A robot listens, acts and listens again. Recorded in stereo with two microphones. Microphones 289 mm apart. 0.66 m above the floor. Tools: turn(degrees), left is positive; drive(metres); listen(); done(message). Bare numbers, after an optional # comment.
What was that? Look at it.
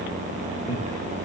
# The laughter: about 50° left or 130° left.
turn(50)
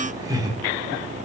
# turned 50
# So it is at 15° right.
turn(-15)
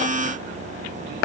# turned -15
listen()
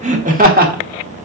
# The laughter is now 30° right.
turn(-30)
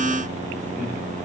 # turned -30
listen()
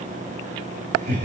# The laughter is now 35° right.
turn(-35)
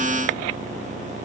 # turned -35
listen()
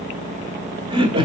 # The laughter is now 15° right.
turn(-15)
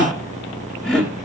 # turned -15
done("Facing the laughter.")